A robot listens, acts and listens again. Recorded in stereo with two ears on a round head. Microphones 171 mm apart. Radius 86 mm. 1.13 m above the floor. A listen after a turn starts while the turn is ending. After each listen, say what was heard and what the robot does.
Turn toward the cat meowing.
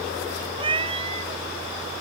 The cat meowing: about 30° right or 150° right. Turn 30° right.
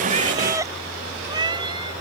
The cat meowing: about 20° right or 160° right. Turn 20° right.
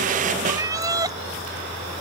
The cat meowing: about 20° right or 160° right. Turn 20° right.
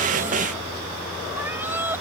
So it is at 10° right. Turn 10° right.
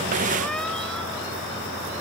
Keep listening.
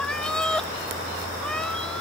Found it: a cat meowing, straight ahead.